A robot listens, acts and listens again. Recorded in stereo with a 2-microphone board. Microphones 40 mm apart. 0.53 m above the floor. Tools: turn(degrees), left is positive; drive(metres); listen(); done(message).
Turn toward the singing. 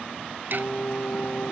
turn(degrees=40)
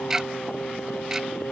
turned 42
turn(degrees=110)
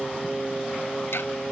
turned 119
done("Facing the singing.")